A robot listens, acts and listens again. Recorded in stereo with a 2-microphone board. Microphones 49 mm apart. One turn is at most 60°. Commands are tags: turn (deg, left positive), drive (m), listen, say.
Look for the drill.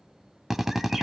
<turn deg="-30"/>
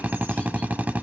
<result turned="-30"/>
<turn deg="-60"/>
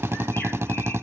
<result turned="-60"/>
<turn deg="-60"/>
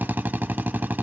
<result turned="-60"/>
<turn deg="-50"/>
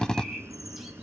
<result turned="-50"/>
<turn deg="15"/>
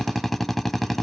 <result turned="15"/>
<say>Facing the drill.</say>